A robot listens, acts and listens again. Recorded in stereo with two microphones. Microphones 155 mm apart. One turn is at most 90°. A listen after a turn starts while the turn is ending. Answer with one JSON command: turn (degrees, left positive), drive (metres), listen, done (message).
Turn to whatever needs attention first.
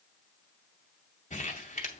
{"listen": true}
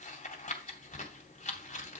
{"listen": true}
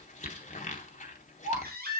{"turn": -90}
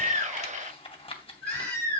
{"turn": 10}
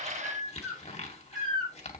{"done": "Found it: a baby crying, straight ahead, over 4 m away."}